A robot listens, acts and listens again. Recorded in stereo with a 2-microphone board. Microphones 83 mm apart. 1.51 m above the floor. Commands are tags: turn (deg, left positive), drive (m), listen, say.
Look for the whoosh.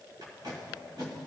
<listen/>
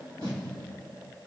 <listen/>
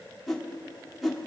<turn deg="30"/>
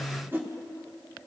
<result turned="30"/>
<turn deg="-30"/>
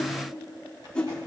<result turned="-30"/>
<turn deg="15"/>
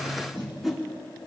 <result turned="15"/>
<say>Found it: a whoosh, straight ahead, under 1 m away.</say>